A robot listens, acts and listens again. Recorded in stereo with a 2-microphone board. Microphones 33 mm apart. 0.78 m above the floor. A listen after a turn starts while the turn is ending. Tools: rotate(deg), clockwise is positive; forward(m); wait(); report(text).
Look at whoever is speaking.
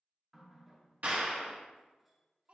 rotate(45)
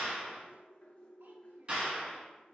wait()
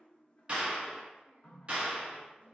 wait()
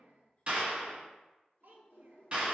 rotate(90)
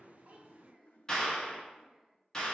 wait()
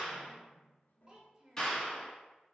rotate(25)
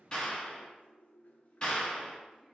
wait()
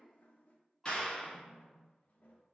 rotate(10)
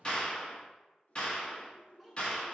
wait()
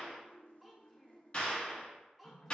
report("Found it: a child speaking, straight ahead.")